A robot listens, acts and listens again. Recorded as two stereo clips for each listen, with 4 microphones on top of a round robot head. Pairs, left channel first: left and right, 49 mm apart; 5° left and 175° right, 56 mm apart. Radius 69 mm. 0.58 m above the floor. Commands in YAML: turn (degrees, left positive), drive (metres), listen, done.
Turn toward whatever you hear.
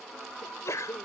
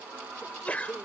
turn: 70
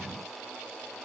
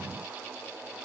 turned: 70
done: "Facing where the sneeze came from. I can't hear it now."